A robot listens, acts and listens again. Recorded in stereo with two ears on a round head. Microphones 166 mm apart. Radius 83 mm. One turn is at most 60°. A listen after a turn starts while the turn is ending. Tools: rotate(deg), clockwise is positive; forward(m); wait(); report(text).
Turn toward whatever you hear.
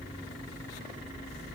wait()
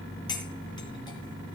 rotate(-25)
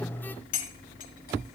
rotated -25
rotate(-60)
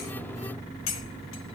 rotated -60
rotate(-60)
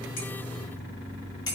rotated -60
rotate(-20)
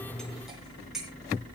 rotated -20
report("Facing the cutlery clinking.")